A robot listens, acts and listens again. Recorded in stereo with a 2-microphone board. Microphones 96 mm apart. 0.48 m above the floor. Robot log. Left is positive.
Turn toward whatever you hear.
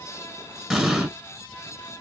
cmd yaw -30
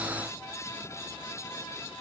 cmd idle
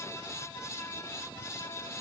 end: I heard an explosion, but can't make it out now. It was about 25° left or 145° right.